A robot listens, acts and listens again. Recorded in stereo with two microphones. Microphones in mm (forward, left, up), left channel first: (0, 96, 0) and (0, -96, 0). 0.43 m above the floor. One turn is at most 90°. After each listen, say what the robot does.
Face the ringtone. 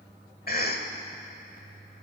Keep listening.
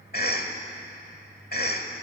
Keep listening.
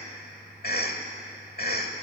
I can't make out a ringtone, only a cough.